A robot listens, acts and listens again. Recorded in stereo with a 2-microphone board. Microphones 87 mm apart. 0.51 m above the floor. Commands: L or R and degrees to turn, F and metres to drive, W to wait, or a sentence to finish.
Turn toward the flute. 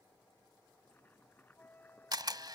L20
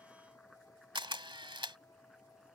W
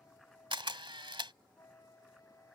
L140
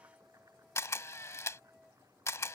Facing the flute.